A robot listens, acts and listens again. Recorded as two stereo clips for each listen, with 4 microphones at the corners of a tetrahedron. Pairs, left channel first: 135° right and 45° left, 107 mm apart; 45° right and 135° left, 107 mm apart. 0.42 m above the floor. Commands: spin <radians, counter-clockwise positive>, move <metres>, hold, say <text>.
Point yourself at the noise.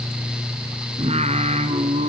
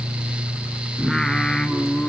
spin 0.70
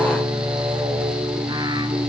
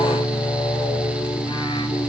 hold
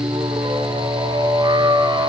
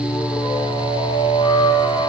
say Facing the singing.